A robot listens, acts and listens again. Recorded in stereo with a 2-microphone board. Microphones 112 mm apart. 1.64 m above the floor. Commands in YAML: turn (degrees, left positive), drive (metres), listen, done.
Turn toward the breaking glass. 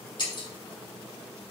turn: 40
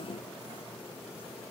listen: true
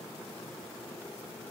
done: "I heard breaking glass, but can't make it out now. It was about straight ahead or 100° left."